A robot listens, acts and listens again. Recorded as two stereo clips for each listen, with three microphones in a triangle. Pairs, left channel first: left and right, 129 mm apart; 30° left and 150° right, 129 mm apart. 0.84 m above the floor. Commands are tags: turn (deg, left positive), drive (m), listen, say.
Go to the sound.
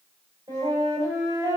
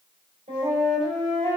<turn deg="-150"/>
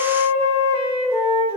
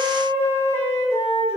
<turn deg="-40"/>
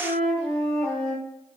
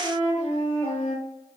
<drive m="1.0"/>
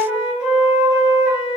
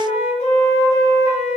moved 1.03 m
<turn deg="-10"/>
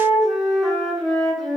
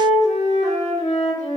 <drive m="1.0"/>
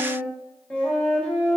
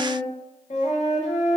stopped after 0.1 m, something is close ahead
<turn deg="10"/>
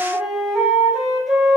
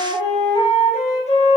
<say>I am next to the flute.</say>